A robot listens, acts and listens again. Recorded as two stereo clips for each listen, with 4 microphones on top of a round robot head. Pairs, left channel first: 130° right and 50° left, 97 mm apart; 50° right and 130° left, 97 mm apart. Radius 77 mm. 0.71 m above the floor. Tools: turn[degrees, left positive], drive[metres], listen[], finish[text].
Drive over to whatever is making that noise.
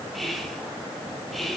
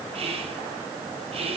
Thought: The whispering: 140° left.
Action: turn[140]
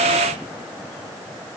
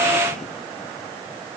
Action: listen[]
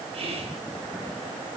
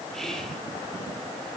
Thought: The whispering is now 40° left.
Action: turn[40]
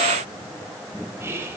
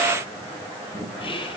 Thought: The whispering is now 15° right.
Action: turn[-15]
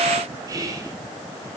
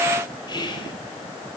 Action: drive[1.0]
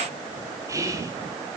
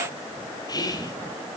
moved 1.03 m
Action: drive[1.0]
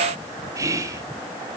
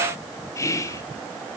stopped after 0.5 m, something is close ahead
Action: finish[I am next to the whispering.]